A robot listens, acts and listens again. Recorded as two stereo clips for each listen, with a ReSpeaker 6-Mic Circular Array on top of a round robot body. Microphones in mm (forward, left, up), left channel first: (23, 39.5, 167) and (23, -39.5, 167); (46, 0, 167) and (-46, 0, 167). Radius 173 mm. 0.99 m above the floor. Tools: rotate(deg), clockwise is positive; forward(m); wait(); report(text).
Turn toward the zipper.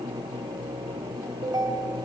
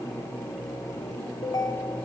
wait()
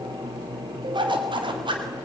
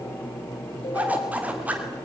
rotate(105)
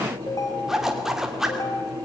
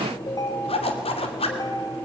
report("Found it: a zipper, straight ahead, 2 to 4 m away.")